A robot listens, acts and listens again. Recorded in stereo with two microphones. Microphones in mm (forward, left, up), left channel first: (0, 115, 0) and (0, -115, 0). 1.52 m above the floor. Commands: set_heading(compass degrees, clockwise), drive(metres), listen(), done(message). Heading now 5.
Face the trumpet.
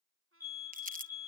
set_heading(70)
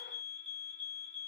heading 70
listen()
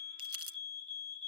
listen()
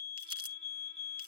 done("I heard a trumpet, but can't make it out now. It was about straight ahead or 50° right.")